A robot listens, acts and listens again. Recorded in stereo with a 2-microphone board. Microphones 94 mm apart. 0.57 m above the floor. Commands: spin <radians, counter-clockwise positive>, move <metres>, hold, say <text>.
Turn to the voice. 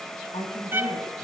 spin 1.57
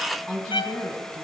spin 0.17
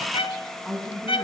say Found it: a woman speaking, straight ahead.